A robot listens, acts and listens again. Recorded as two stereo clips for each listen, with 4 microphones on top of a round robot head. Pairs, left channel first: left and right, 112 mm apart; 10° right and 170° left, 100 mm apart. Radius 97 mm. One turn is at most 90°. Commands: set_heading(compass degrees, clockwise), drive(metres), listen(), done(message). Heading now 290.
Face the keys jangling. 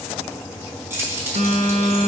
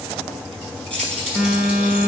set_heading(20)
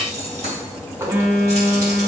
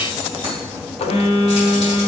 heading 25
set_heading(85)
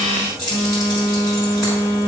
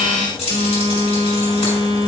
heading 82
done("Facing the keys jangling.")